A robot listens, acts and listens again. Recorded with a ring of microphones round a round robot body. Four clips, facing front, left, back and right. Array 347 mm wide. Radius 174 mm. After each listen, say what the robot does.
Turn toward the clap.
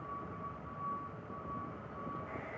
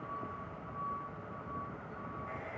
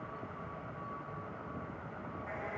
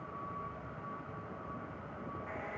Keep listening.
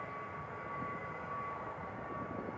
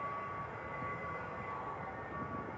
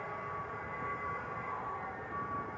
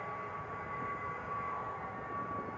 Keep listening.
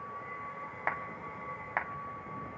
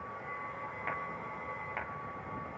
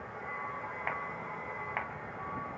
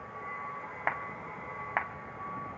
Turn 75° right.
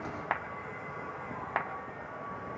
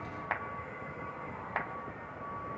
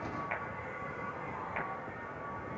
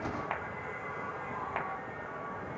Found it: a clap, straight ahead.